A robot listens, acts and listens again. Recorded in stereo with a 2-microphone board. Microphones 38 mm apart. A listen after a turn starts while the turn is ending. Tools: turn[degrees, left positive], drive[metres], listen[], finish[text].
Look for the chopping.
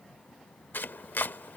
Thought: The chopping: about 65° left or 115° left.
Action: turn[65]
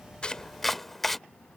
Action: finish[Facing the chopping.]